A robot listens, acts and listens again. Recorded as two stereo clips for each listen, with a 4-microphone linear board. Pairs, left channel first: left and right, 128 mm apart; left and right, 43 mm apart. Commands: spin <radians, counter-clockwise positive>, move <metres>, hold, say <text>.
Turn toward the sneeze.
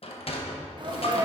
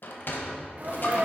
spin -0.70
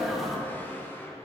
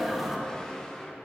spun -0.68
say Facing the sneeze, 1 to 2 m away.